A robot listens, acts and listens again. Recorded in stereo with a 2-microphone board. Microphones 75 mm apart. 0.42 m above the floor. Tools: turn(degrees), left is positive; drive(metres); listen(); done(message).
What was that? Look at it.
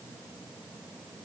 listen()
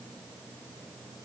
listen()
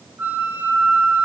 turn(degrees=-25)
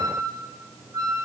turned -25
turn(degrees=-130)
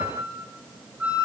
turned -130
turn(degrees=-15)
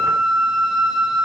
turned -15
done("Found it: a flute, straight ahead.")